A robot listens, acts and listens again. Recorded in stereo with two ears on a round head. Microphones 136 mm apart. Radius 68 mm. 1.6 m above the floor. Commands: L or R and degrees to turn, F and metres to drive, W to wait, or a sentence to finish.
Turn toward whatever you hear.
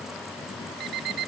R70
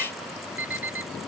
R15
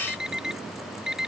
Facing the alarm clock.